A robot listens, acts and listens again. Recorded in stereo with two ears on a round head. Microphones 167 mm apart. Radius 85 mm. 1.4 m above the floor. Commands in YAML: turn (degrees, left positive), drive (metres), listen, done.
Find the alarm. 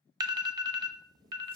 turn: -20
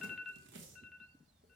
done: "Found it: an alarm, straight ahead."